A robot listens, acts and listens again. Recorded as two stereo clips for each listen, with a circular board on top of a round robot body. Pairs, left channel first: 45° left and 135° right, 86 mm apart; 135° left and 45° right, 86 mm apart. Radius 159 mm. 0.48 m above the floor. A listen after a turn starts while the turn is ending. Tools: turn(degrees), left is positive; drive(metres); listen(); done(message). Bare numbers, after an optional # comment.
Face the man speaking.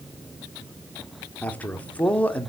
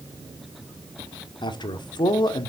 # The man speaking: 115° left.
turn(115)
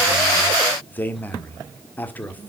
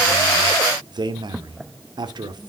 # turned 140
# The man speaking is now 25° right.
turn(-25)
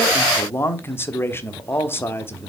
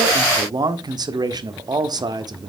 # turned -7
# The man speaking is now 15° right.
turn(-15)
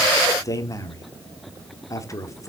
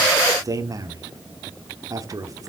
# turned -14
done("Facing the man speaking.")